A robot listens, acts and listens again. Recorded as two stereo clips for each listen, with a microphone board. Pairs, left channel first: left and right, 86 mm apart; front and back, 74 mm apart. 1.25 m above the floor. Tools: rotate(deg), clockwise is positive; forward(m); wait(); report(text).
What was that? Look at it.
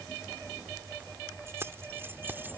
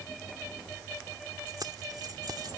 rotate(155)
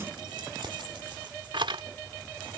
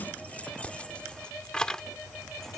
rotate(80)
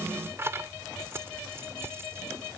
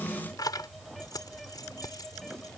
rotate(30)
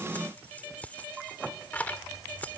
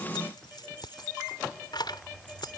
rotate(-20)
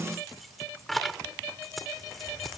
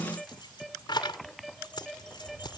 report("Found it: keys jangling, straight ahead.")